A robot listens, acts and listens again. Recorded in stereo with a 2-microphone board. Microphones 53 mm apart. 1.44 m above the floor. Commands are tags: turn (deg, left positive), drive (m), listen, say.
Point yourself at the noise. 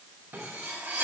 <turn deg="-55"/>
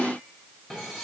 <listen/>
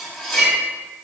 <say>Facing the cutlery clinking.</say>